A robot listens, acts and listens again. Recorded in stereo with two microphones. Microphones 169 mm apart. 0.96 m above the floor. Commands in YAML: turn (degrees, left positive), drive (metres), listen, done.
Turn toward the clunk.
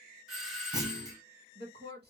turn: -20
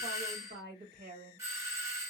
listen: true
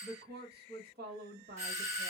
done: "I heard a clunk, but can't make it out now. It was about straight ahead or 140° right."